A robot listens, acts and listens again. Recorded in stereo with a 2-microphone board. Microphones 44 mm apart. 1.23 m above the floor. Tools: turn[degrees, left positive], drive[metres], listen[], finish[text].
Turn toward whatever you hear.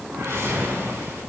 Action: turn[-90]
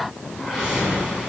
Thought: So it is at 15° right.
Action: turn[-15]
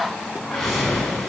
Action: finish[Facing the whoosh, over 4 m away.]